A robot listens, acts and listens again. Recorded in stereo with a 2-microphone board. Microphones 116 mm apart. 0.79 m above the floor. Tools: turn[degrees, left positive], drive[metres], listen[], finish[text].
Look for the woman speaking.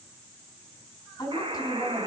Thought: The woman speaking: about 30° left or 150° left.
Action: turn[30]
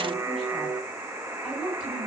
Action: finish[Facing the woman speaking, over 4 m away.]